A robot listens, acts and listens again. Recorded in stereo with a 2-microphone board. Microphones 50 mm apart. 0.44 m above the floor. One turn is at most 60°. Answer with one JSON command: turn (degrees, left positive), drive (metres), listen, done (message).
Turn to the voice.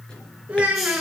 {"turn": -25}
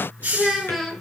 {"done": "Found it: a child speaking, straight ahead."}